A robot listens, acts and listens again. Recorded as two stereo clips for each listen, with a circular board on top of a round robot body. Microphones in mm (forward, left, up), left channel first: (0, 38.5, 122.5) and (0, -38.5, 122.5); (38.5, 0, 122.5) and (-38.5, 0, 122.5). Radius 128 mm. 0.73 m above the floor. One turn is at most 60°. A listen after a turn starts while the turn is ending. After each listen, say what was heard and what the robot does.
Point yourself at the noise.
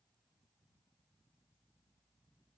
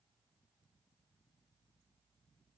Keep listening.
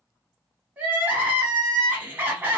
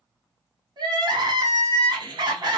The crying: 160° right. Turn 60° right.
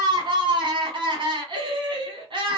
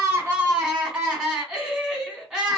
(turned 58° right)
The crying is now 100° right. Turn 60° right.
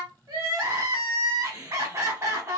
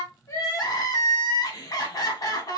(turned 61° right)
The crying is now 40° right. Turn 40° right.
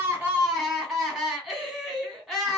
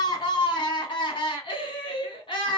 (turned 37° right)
Facing the crying.